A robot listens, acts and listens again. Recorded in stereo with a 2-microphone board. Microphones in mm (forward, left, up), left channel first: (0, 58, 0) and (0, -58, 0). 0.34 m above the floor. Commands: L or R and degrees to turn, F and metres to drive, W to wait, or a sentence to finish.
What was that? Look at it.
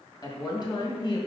L40
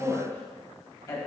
L30
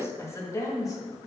L30
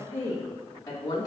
L30
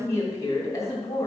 L30
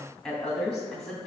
Facing the woman speaking, 2 to 4 m away.